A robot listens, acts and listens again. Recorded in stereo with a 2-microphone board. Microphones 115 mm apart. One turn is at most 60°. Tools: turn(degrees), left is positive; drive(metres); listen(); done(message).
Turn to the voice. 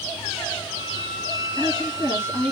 turn(degrees=30)
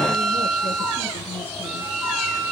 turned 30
listen()
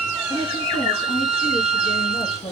turn(degrees=60)
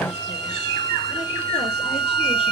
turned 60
turn(degrees=60)
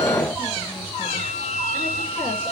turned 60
listen()
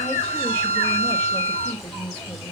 turn(degrees=10)
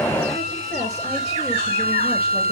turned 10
listen()
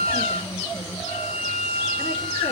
listen()
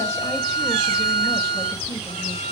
done("Facing where the woman speaking came from. I can't hear it now.")